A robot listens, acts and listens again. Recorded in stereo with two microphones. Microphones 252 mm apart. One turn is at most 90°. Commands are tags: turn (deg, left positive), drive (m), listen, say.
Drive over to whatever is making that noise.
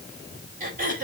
<turn deg="-30"/>
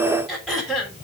<drive m="1.0"/>
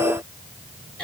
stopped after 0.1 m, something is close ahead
<say>Something is in my way. I am facing the throat clearing but have not reached it.</say>